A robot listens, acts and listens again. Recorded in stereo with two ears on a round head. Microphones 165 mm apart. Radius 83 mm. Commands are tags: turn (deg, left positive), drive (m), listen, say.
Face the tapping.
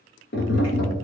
<turn deg="65"/>
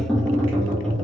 <say>Facing the tapping.</say>